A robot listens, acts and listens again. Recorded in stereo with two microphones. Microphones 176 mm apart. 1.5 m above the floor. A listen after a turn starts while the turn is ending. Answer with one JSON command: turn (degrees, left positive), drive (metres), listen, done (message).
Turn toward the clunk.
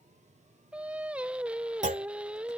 {"turn": -45}
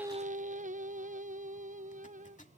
{"listen": true}
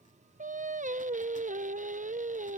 {"done": "I heard a clunk, but can't make it out now. It was about straight ahead or 90° right."}